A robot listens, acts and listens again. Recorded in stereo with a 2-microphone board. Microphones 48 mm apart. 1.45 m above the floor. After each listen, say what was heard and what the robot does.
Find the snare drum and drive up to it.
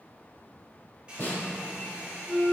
The snare drum: about 30° left or 150° left. Turn 30° left.
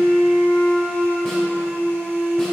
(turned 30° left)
Keep listening.
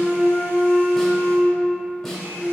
Keep listening.
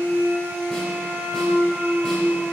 I heard a snare drum, but can't make it out now. It was about straight ahead or 120° left. I did not reach it.